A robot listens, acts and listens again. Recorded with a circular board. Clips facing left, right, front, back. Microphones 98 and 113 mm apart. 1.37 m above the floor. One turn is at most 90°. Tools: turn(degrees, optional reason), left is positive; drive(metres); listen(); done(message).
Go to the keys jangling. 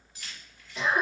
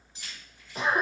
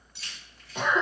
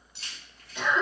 turn(degrees=-90, reason="The keys jangling: 155° right.")
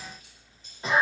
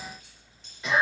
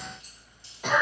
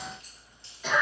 turn(degrees=-65, reason="Nothing new. It was at 65° right.")
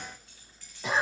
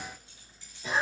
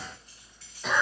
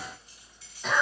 listen()
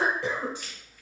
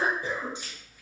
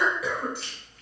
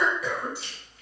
turn(degrees=-25, reason="The keys jangling is now 25° right.")
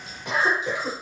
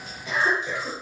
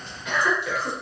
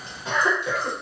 listen()
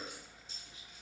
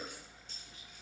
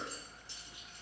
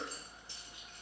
listen()
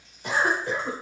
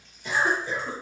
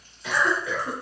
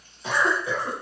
done("I heard keys jangling from this way, but can't make it out now. I did not reach it.")